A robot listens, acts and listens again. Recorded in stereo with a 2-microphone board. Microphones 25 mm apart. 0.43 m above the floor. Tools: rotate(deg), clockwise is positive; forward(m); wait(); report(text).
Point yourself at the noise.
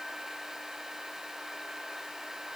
wait()
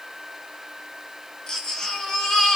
rotate(-30)
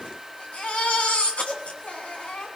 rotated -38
rotate(-110)
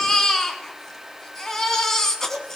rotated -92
rotate(-20)
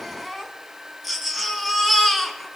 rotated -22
report("Facing the baby crying, 2 to 4 m away.")